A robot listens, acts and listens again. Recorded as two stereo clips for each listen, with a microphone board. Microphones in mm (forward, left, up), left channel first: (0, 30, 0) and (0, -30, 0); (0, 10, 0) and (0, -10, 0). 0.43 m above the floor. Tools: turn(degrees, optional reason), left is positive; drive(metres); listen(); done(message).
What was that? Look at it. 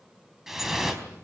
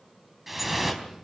turn(degrees=-30)
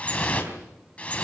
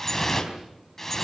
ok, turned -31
turn(degrees=20, reason="So it is at 20° left.")
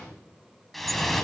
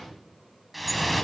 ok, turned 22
done("Found it: dripping, straight ahead, over 4 m away.")